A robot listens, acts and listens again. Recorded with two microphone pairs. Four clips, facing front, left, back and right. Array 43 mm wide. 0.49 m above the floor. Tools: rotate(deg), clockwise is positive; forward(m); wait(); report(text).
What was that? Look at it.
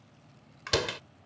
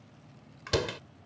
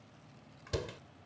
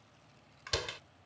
report("Facing the door slam.")